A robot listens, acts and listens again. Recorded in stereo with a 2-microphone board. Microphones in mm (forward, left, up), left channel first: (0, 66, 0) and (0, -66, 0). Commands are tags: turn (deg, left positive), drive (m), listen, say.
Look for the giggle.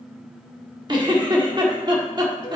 <turn deg="-35"/>
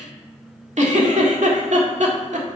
<turn deg="-110"/>
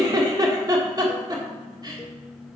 <turn deg="-30"/>
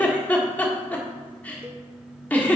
<turn deg="10"/>
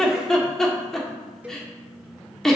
<say>Found it: a giggle, straight ahead.</say>